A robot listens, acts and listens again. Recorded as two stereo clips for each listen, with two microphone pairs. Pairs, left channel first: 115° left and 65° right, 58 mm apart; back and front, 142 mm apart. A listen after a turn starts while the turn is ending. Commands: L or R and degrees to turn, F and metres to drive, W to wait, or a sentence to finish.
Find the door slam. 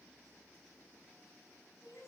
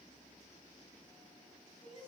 W
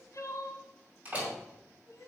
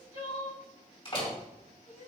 R130
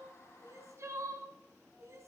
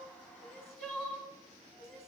I heard a door slam from this way, but can't make it out now.